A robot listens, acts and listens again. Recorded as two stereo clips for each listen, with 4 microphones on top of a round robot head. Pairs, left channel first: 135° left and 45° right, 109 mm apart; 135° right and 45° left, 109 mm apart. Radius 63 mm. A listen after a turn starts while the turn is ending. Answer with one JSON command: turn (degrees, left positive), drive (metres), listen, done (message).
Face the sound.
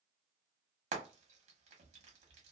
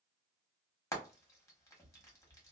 {"turn": -70}
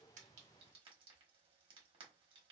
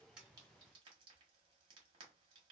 {"listen": true}
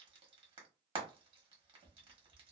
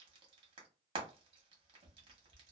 {"done": "Facing the frying, 1 to 2 m away."}